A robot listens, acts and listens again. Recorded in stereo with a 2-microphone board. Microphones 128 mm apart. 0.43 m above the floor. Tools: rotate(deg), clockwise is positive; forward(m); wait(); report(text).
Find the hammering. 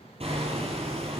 rotate(50)
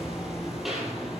report("Facing the hammering, over 4 m away.")